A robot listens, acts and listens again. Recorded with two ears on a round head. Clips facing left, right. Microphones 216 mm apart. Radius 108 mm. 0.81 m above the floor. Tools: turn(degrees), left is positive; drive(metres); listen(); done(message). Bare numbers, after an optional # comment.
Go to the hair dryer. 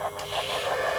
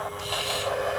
# The hair dryer: about 35° left or 145° left.
turn(35)
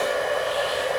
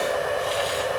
drive(1.0)
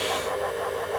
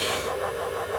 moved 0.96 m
listen()
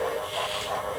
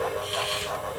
listen()
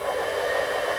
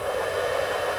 # The hair dryer is now 10° right.
turn(-10)
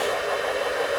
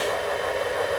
drive(1.0)
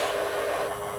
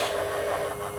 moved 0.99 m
listen()
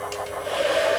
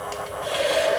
drive(1.0)
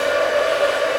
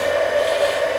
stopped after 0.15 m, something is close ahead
# The hair dryer is now 10° left.
turn(10)
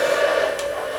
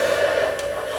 done("Arrived at the hair dryer, straight ahead.")